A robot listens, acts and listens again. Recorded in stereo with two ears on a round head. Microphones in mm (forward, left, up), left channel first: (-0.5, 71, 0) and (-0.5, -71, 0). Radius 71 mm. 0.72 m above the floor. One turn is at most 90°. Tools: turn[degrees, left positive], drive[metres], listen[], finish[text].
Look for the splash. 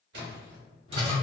Thought: The splash: about 75° right or 105° right.
Action: turn[-75]
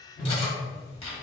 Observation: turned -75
Action: listen[]
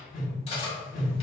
Action: finish[I heard a splash, but can't make it out now. It was about straight ahead or 30° right.]